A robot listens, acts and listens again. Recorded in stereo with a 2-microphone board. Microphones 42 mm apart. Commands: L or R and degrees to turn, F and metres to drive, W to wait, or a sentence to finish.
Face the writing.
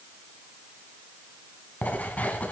L40
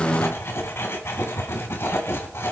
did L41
L100
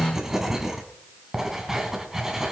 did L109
R10
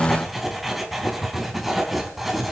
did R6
Facing the writing.